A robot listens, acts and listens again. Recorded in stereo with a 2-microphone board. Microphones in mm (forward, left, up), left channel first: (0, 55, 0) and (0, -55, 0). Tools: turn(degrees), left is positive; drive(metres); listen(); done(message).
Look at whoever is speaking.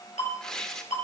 listen()
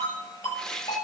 listen()
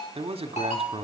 turn(degrees=-60)
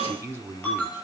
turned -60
turn(degrees=-25)
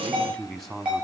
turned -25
done("Found it: a man speaking, straight ahead.")